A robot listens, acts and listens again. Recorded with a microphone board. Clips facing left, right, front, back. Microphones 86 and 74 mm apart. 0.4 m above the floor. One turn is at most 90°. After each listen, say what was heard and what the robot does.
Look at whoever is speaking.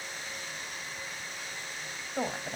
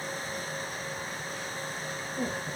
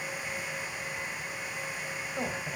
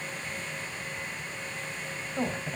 The woman speaking: 90° left. Turn 90° left.
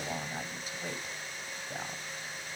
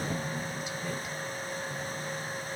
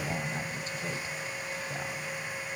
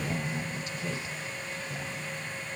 The woman speaking is now 45° left. Turn 45° left.
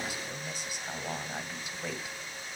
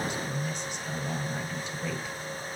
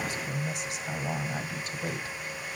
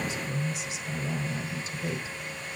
The woman speaking is now 10° left. Turn 10° left.
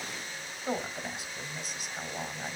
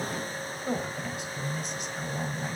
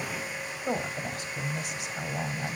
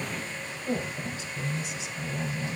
Facing the woman speaking, 1 to 2 m away.